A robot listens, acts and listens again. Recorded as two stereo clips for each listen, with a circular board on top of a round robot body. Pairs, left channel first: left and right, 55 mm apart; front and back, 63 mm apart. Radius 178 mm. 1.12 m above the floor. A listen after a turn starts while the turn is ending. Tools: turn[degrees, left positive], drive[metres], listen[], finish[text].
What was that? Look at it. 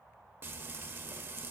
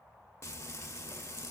Thought: The frying: 45° right.
Action: turn[-45]
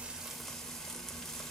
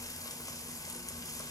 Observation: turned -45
Thought: The frying is now 10° left.
Action: turn[10]
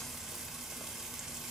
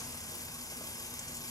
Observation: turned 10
Action: finish[Found it: frying, straight ahead, under 1 m away.]